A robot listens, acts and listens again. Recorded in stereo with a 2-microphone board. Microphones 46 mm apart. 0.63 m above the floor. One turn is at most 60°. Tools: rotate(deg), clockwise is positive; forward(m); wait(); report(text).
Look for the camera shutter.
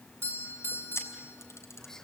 rotate(-60)
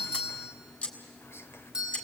rotate(-30)
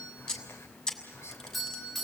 rotate(-15)
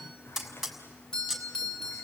report("Facing the camera shutter.")